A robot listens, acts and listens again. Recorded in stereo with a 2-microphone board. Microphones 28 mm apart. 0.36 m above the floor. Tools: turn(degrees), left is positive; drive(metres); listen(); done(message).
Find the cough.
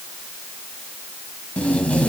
listen()
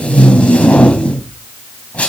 listen()
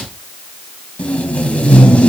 done("I can't make out a cough, only tape being pulled.")